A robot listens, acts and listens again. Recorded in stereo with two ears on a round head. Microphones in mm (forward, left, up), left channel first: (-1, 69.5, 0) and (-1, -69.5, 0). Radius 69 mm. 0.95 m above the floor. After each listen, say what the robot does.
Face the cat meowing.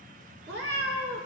Turn 90° right.
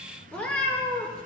Turn 10° left.
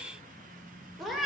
Found it: a cat meowing, straight ahead.